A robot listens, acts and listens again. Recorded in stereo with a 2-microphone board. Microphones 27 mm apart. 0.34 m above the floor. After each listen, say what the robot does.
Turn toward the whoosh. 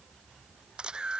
Keep listening.
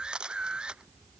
Keep listening.
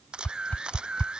Turn 55° left.
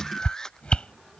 Turn 55° left.
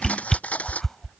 Turn 20° left.
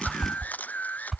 Found it: a whoosh, straight ahead.